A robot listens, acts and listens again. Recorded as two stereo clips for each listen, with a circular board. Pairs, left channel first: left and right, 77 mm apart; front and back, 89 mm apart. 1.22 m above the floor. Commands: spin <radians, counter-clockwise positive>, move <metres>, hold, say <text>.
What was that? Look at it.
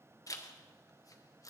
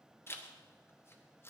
spin 0.96
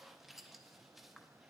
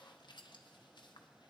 say Found it: a zipper, straight ahead, under 1 m away.